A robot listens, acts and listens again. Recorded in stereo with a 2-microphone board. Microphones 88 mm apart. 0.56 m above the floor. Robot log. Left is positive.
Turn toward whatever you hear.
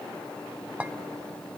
note: The clink: about 15° right or 165° right.
cmd yaw -15
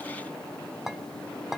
end: Found it: a clink, straight ahead, under 1 m away.